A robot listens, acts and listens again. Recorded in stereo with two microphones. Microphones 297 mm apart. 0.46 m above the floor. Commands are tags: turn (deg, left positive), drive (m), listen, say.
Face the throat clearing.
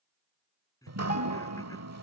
<turn deg="30"/>
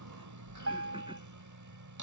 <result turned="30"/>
<listen/>
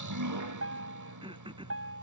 <turn deg="-20"/>
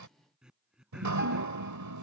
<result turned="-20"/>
<say>Found it: throat clearing, straight ahead.</say>